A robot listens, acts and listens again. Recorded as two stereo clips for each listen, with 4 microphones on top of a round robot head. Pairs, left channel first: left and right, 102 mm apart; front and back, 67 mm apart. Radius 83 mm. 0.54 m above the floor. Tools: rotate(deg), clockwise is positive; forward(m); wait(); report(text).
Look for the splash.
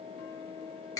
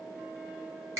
wait()
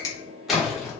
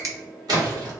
rotate(-180)
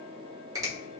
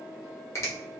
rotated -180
report("Facing where the splash came from. I can't hear it now.")